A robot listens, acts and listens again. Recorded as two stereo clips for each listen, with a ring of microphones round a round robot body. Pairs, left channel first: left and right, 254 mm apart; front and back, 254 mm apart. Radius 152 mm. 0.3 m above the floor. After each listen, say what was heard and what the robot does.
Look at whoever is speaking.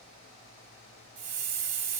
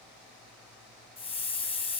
Keep listening.
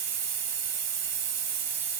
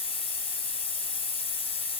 Keep listening.
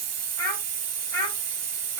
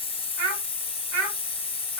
The child speaking: 165° left. Turn 165° left.
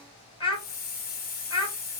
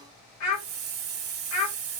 The child speaking is now 20° left. Turn 20° left.
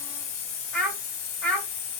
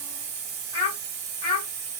Found it: a child speaking, straight ahead.